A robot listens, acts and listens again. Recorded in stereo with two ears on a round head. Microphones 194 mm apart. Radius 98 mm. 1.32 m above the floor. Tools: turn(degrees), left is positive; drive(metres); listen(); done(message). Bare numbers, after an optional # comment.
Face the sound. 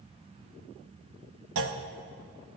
# The clunk: about 70° right or 110° right.
turn(-70)
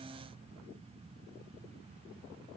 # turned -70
listen()
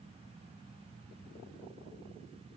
done("I heard a clunk, but can't make it out now. It was about straight ahead or 40° right.")